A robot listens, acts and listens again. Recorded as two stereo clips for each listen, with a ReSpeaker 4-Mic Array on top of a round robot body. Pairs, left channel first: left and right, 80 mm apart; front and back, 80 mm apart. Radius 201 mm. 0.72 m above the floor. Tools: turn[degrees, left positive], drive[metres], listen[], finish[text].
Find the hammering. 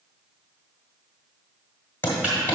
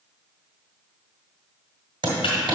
Thought: The hammering: 155° left.
Action: turn[155]
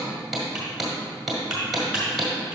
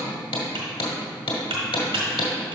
Action: finish[Found it: hammering, straight ahead, 1 to 2 m away.]